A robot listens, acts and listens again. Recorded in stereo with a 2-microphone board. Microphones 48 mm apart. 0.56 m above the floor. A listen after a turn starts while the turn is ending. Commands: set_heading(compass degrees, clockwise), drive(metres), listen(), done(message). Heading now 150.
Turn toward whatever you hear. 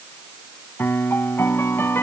set_heading(90)
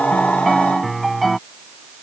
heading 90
done("Facing the piano.")